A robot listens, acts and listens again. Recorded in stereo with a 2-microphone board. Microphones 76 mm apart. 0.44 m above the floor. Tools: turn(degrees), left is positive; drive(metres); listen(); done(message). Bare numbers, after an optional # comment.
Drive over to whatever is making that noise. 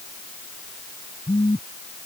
turn(90)
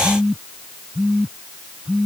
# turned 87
drive(1.0)
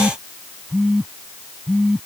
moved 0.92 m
drive(1.0)
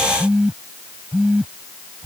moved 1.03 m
# The phone buzzing is now 10° right.
turn(-10)
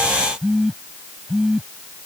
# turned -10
drive(1.0)
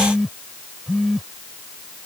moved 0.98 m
drive(1.0)
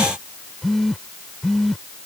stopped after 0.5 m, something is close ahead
done("I am next to the phone buzzing.")